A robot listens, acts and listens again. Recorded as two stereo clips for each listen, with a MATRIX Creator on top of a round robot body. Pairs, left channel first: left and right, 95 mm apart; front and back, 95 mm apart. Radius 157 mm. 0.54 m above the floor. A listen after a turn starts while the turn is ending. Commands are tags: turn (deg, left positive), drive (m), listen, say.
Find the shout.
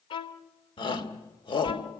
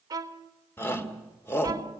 <turn deg="65"/>
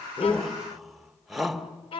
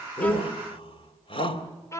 <say>Found it: a shout, straight ahead.</say>